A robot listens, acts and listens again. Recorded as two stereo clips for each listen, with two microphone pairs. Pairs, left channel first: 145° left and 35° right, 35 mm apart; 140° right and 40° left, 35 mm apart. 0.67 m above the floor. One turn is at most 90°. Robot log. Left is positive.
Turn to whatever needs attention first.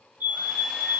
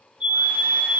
note: The fire alarm: 15° right.
cmd yaw -15
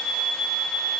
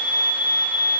end: Facing the fire alarm, over 4 m away.